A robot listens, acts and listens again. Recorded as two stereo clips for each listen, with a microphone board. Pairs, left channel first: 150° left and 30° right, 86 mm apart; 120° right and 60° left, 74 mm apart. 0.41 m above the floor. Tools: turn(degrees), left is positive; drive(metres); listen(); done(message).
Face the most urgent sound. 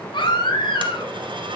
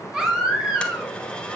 turn(degrees=140)
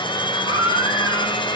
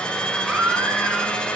turn(degrees=-10)
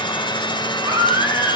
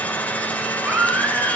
done("Facing the baby crying.")